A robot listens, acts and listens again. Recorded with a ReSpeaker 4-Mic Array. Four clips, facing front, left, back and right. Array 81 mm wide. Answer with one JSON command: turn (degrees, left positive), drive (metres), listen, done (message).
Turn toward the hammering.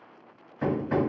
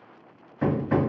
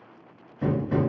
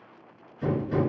{"turn": 70}
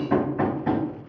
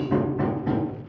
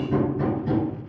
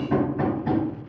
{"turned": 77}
{"done": "Facing the hammering."}